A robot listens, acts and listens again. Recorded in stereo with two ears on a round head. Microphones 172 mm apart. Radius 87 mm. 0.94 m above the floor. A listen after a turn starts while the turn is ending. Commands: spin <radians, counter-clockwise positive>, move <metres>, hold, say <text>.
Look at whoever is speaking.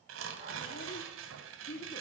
spin 0.70
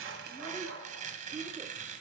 hold
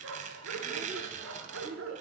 spin -0.70
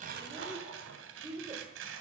spin -0.35
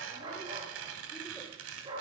hold
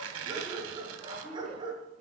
hold
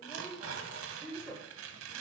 say Facing the child speaking, 2 to 4 m away.